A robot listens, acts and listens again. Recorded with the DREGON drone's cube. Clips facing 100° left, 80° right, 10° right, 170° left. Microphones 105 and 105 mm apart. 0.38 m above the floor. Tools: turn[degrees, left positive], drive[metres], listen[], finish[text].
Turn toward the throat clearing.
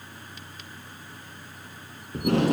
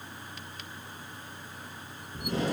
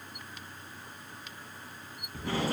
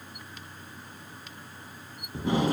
Action: listen[]
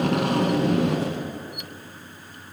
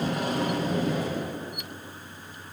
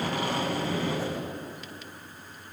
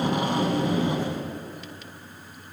Action: listen[]
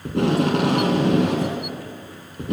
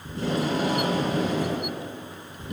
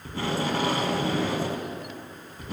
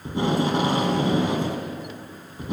Action: finish[I can't make out throat clearing, only tape being pulled.]